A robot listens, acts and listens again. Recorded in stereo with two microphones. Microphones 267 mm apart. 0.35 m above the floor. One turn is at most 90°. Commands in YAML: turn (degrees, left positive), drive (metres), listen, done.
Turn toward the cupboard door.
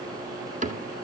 turn: -30
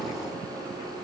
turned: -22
listen: true
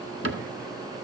turn: -90
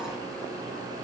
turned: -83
turn: -45
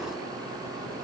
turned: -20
turn: -25
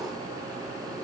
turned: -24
done: "I heard a cupboard door from this way, but can't make it out now."